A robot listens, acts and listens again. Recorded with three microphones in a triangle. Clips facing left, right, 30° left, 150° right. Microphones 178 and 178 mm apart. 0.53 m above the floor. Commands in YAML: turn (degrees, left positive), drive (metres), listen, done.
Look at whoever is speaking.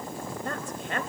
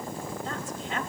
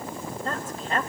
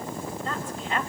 turn: 70
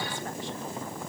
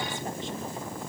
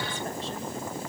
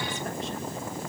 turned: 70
listen: true
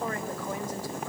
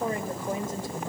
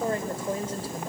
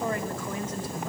turn: -25
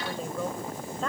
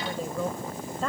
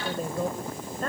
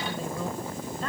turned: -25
done: "Found it: a woman speaking, straight ahead, 2 to 4 m away."